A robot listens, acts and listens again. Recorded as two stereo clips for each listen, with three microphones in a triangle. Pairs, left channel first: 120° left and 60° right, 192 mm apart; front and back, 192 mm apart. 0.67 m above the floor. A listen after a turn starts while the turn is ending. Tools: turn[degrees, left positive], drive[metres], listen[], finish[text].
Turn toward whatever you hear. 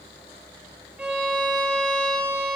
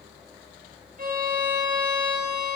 Thought: The violin: 145° right.
Action: turn[-145]
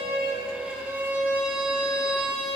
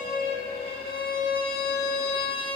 Thought: The violin is now 25° left.
Action: turn[25]
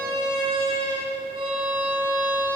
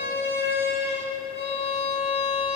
Action: finish[Facing the violin, 1 to 2 m away.]